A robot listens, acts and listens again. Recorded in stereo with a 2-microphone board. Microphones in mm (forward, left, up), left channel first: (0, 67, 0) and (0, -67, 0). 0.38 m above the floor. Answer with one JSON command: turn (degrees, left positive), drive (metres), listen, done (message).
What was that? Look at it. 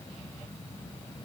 {"listen": true}
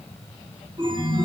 {"turn": -35}
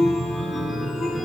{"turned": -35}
{"done": "Found it: a chime, straight ahead."}